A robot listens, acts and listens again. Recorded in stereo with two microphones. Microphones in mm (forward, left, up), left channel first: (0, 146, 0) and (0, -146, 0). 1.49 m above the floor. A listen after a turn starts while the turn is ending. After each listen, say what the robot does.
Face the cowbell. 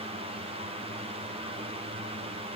Keep listening.
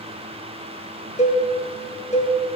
Turn 25° left.
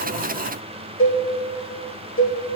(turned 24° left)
Turn 130° left.
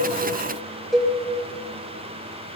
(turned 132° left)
Facing the cowbell.